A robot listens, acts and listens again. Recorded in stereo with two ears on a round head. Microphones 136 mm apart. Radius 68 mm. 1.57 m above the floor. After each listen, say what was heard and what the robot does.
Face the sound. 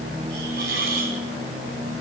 The hiss: about 65° right or 115° right. Turn 65° right.
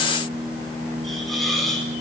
Facing the hiss, over 4 m away.